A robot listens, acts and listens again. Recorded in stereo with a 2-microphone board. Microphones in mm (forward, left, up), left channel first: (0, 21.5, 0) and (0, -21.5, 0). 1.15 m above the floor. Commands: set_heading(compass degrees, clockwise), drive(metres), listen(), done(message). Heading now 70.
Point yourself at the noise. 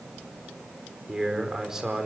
set_heading(100)
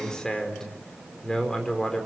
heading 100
set_heading(85)
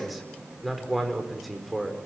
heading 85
done("Found it: a man speaking, straight ahead, over 4 m away.")